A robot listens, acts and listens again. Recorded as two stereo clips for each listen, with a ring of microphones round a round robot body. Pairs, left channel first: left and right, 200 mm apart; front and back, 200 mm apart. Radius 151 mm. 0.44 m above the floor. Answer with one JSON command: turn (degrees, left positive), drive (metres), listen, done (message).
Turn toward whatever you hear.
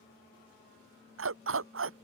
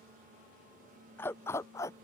{"turn": -80}
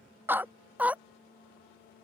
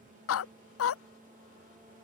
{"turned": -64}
{"done": "Facing the dog barking."}